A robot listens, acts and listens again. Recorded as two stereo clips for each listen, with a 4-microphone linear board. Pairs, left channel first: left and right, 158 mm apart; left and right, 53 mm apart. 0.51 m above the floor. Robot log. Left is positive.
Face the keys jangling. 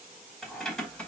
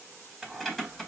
cmd yaw +30
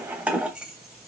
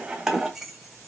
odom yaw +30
cmd yaw -30
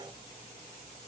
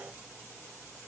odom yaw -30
cmd idle
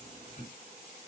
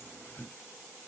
note: So it is at 50° left.
cmd yaw +50
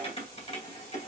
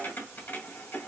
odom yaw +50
note: The keys jangling is now 45° left.
cmd yaw +45
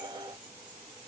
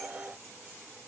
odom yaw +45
cmd idle
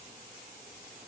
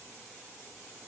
cmd idle
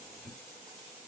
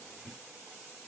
note: The keys jangling is now 10° left.
cmd yaw +10
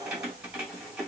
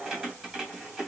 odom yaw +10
end: Facing the keys jangling, 1 to 2 m away.